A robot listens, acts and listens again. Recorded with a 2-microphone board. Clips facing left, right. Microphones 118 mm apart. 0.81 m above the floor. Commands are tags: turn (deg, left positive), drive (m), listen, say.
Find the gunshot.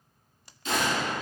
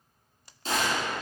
<turn deg="-35"/>
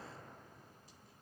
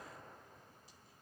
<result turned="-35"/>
<listen/>
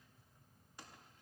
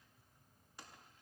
<say>I heard a gunshot, but can't make it out now. It was about straight ahead or 110° right.</say>